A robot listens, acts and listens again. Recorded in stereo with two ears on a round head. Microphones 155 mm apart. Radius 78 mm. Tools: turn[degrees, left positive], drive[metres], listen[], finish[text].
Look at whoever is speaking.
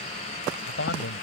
Action: turn[90]
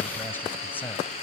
Thought: So it is at 10° left.
Action: turn[10]
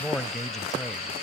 Action: finish[Facing the man speaking.]